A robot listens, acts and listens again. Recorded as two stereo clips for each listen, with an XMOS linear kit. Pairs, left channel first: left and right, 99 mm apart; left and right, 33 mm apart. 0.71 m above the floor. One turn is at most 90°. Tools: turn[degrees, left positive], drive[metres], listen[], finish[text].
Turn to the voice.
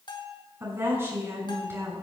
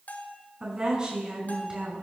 Thought: The woman speaking: about 25° right or 155° right.
Action: turn[-25]
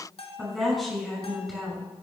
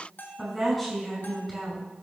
Action: finish[Found it: a woman speaking, straight ahead, over 4 m away.]